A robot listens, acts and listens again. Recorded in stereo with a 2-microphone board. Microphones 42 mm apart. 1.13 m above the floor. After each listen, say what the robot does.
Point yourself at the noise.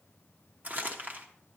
Turn 40° right.
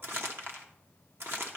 Turn 95° right.
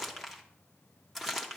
Found it: crumpling, straight ahead.